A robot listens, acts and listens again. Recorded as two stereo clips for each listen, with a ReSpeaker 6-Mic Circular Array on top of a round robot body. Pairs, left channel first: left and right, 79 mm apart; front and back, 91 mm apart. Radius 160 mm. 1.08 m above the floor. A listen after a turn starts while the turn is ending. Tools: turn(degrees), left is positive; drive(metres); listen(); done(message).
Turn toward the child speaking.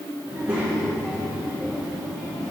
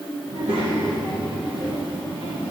turn(degrees=-160)
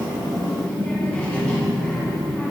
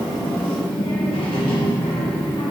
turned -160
turn(degrees=15)
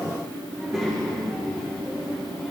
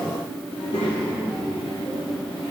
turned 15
done("Found it: a child speaking, straight ahead.")